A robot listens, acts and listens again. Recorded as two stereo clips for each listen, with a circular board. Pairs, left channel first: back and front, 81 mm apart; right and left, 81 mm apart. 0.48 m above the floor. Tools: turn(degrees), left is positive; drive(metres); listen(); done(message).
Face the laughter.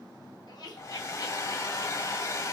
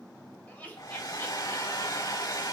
turn(degrees=-160)
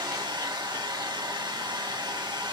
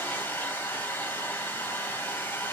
listen()
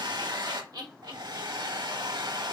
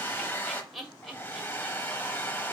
done("Found it: laughter, straight ahead.")